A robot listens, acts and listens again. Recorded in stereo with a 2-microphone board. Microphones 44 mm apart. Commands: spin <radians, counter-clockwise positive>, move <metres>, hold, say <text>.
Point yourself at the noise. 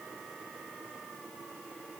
hold
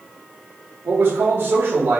spin -1.31
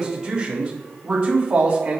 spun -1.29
spin -0.52
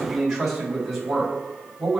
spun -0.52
say Facing the man speaking.